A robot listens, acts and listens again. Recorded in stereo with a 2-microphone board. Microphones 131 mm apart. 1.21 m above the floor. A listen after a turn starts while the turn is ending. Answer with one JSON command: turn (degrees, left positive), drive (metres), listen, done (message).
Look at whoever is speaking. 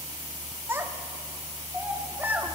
{"turn": -30}
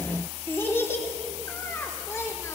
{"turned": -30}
{"turn": 20}
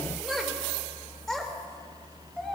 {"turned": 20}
{"done": "Facing the child speaking, 2 to 4 m away."}